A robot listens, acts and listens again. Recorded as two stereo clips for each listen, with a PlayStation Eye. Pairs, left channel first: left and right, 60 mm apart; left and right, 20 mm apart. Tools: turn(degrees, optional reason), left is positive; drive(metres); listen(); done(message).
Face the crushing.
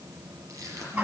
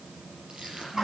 turn(degrees=-60, reason="The crushing: about 60° right or 120° right.")
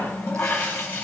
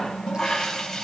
listen()
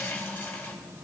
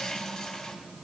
listen()
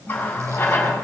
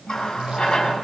done("I heard crushing, but can't make it out now. It was about straight ahead or 60° right.")